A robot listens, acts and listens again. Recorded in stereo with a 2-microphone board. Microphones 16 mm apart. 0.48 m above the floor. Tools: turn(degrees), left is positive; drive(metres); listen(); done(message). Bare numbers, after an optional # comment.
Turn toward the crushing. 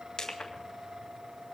# The crushing: about 60° left or 120° left.
turn(60)
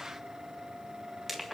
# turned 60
done("Facing the crushing, 2 to 4 m away.")